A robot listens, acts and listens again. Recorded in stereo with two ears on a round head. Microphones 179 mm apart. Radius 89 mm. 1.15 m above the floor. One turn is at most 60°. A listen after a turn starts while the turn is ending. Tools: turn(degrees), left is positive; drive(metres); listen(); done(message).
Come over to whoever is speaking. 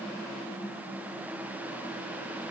listen()
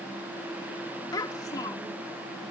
turn(degrees=20)
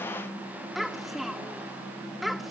drive(metres=1.0)
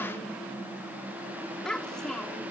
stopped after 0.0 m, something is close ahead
done("Something is in my way. I am facing the child speaking but have not reached it.")